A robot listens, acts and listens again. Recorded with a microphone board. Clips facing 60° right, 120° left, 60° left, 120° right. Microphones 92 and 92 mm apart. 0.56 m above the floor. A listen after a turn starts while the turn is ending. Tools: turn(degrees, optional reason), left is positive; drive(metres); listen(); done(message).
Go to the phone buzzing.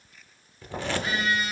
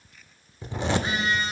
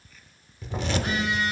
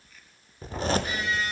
turn(degrees=60, reason="The phone buzzing: 60° left.")
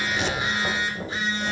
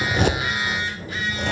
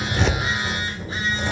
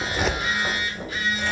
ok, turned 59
drive(metres=1.0)
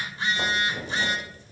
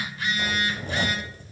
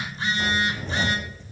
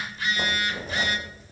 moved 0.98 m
drive(metres=1.0)
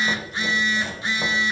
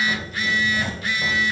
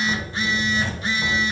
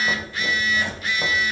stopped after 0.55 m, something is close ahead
done("I am next to the phone buzzing.")